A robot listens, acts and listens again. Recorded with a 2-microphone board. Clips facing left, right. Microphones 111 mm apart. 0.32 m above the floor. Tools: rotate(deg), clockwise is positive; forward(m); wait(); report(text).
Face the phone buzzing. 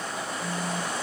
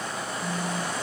rotate(-30)
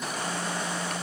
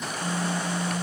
rotate(25)
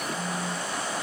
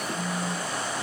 report("Facing the phone buzzing.")